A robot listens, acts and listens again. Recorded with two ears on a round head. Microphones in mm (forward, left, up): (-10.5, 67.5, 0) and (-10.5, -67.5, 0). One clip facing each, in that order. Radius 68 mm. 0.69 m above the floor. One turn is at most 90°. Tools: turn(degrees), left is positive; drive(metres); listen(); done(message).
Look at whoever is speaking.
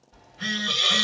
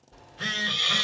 listen()
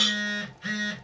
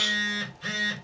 listen()
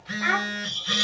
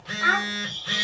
turn(degrees=20)
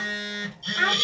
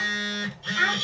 turn(degrees=90)
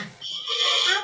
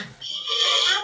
turn(degrees=50)
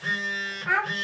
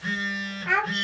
turn(degrees=-25)
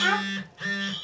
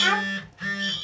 done("Facing the child speaking, 1 to 2 m away.")